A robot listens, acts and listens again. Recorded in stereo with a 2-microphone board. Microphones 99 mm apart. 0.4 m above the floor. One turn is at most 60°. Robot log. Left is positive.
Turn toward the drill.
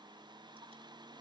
cmd idle
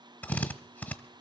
note: The drill: about 20° left or 160° left.
cmd yaw +20
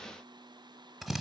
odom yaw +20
end: Found it: a drill, straight ahead, 1 to 2 m away.